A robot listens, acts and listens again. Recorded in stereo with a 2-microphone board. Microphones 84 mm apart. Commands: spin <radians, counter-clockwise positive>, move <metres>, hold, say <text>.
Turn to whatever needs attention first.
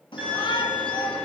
spin 1.31
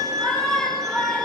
say Facing the shout, 2 to 4 m away.